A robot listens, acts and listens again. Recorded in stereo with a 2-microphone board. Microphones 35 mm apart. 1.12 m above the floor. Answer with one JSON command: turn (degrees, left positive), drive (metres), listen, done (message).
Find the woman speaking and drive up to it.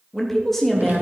{"turn": 30}
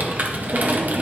{"listen": true}
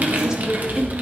{"turn": -25}
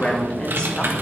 {"turn": 25}
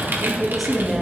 {"drive": 1.0}
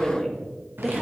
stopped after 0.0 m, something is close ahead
{"done": "Blocked. The woman speaking is further on, straight ahead."}